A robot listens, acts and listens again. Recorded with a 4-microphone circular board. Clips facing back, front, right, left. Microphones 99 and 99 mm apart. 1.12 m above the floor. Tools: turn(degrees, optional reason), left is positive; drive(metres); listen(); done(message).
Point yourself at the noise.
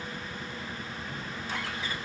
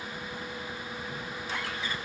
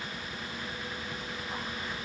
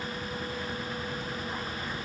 listen()
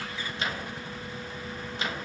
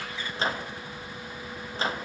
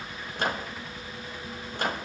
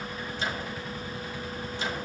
turn(degrees=-55, reason="The microwave: 55° right.")
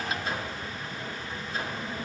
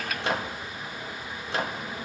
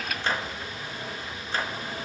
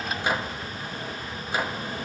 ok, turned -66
turn(degrees=10, reason="The microwave is now 10° left.")
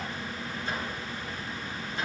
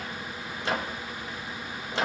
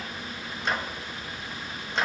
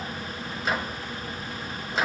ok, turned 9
done("Found it: a microwave, straight ahead.")